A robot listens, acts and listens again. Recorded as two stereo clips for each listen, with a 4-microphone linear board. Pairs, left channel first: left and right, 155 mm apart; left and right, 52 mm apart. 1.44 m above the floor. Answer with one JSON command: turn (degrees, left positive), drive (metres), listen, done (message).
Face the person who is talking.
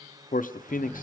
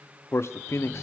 {"turn": 60}
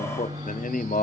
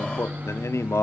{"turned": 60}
{"turn": 60}
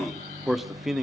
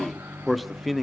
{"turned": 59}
{"done": "Facing the man speaking, under 1 m away."}